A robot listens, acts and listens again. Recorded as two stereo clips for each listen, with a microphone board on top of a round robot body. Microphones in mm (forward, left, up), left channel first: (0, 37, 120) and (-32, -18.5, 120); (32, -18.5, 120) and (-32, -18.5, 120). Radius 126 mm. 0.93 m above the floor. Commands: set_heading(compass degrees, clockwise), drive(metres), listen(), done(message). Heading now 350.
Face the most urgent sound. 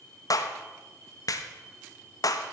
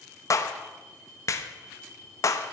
listen()
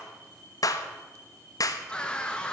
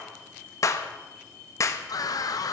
set_heading(5)
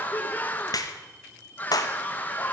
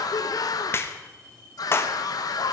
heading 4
done("Found it: a scream, straight ahead, 1 to 2 m away.")